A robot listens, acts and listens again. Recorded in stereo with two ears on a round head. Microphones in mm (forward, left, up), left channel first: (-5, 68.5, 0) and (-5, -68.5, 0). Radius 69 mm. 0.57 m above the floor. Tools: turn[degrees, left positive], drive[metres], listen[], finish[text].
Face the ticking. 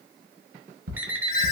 Thought: The ticking: about 55° right or 125° right.
Action: turn[-55]
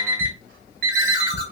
Thought: So it is at 65° right.
Action: turn[-65]
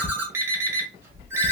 Thought: The ticking is now 25° left.
Action: turn[25]
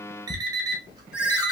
Thought: The ticking is now 20° left.
Action: turn[20]
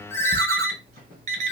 Action: listen[]
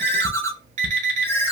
Action: finish[Found it: ticking, straight ahead.]